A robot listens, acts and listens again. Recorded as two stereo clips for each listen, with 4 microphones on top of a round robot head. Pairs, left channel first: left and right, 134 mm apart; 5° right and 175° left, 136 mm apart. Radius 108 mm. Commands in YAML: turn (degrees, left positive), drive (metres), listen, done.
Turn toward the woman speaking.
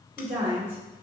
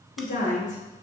turn: -10
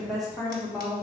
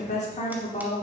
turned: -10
done: "Found it: a woman speaking, straight ahead."